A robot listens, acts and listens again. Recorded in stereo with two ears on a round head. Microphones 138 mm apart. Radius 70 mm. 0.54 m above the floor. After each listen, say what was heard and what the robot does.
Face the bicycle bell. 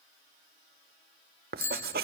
The bicycle bell: about 20° left or 160° left. Turn 20° left.
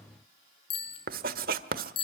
So it is at 145° left. Turn 145° left.
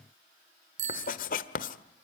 The bicycle bell is now 50° right. Turn 50° right.
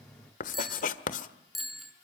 Found it: a bicycle bell, straight ahead, over 4 m away.